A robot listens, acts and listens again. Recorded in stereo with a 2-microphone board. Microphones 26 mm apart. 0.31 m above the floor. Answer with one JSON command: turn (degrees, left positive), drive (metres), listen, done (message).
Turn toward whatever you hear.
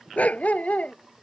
{"turn": 75}
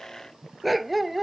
{"done": "Facing the dog barking."}